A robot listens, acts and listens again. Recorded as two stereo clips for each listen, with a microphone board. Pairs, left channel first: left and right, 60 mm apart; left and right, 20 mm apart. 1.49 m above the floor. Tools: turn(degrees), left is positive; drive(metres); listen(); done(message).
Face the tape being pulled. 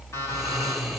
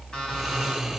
listen()
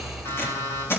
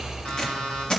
turn(degrees=40)
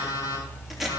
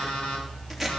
done("Found it: tape being pulled, straight ahead, 2 to 4 m away.")